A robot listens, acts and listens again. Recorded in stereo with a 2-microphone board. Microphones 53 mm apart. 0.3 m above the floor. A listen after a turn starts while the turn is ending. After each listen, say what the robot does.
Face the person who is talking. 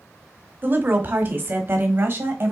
Turn 45° right.
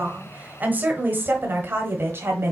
Turn 50° right.
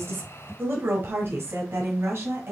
Turn 50° right.
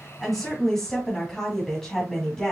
Turn 10° left.
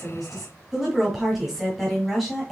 Facing the woman speaking.